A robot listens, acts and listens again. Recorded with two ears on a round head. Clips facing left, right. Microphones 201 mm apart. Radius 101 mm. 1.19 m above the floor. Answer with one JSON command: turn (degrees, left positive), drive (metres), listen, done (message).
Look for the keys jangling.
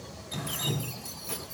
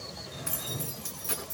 {"turn": -15}
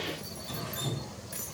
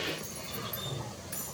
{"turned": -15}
{"done": "Found it: keys jangling, straight ahead, over 4 m away."}